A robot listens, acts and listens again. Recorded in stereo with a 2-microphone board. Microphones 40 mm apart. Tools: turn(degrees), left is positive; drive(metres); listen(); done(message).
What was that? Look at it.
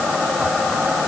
listen()
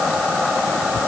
listen()
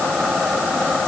done("I can't make out anything to turn to.")